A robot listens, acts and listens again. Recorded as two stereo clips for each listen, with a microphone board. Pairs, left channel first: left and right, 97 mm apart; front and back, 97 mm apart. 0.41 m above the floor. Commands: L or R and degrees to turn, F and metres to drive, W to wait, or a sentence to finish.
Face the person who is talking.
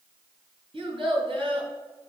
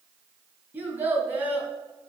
R110
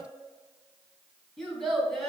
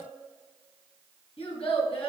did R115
Found it: a child speaking, straight ahead.